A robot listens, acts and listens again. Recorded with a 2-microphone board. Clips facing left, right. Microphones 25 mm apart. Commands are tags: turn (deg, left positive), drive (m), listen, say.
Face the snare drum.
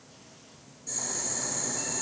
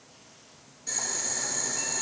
<listen/>
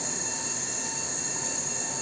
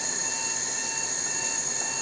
<listen/>
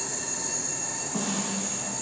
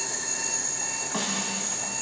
<turn deg="-75"/>
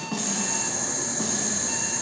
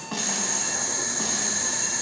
<turn deg="-20"/>
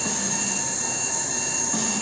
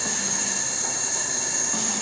<listen/>
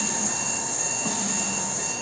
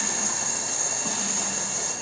<listen/>
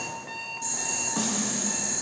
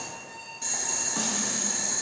<say>Found it: a snare drum, straight ahead.</say>